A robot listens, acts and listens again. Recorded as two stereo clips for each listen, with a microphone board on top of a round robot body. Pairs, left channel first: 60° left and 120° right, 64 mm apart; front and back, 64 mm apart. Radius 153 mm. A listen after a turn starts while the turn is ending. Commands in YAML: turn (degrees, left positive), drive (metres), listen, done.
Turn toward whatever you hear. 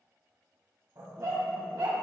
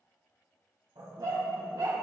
turn: -145
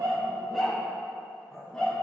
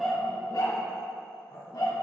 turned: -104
turn: -15
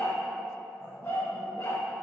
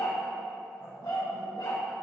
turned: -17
turn: 10
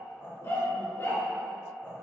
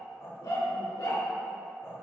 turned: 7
turn: 10
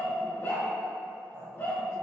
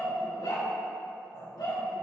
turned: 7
done: "Found it: a dog barking, straight ahead."